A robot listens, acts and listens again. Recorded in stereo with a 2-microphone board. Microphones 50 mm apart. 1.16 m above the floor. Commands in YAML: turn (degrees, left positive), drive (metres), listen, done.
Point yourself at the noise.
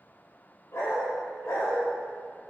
turn: 65
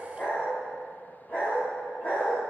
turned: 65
turn: 40
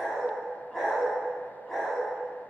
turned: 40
turn: 10
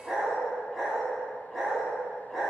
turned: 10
done: "Facing the dog barking."